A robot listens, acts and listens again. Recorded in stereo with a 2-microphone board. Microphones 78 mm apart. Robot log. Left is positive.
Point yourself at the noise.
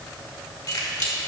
note: The keys jangling: about 55° left or 125° left.
cmd yaw +55
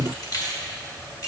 note: So it is at 50° left.
cmd yaw +50
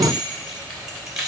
end: Found it: keys jangling, straight ahead.